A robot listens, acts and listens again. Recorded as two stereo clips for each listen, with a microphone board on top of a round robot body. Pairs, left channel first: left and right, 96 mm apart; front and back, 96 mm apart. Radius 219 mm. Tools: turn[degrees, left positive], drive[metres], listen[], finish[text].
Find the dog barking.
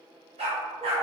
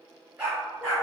Thought: The dog barking: 110° right.
Action: turn[-110]
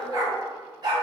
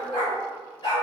Thought: The dog barking is now 45° right.
Action: turn[-45]
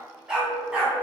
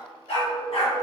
Thought: The dog barking is now 15° right.
Action: turn[-15]
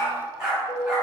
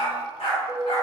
Thought: The dog barking is now 10° right.
Action: turn[-10]
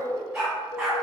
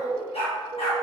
Thought: The dog barking is now 10° right.
Action: turn[-10]
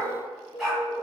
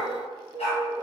Action: finish[Facing the dog barking.]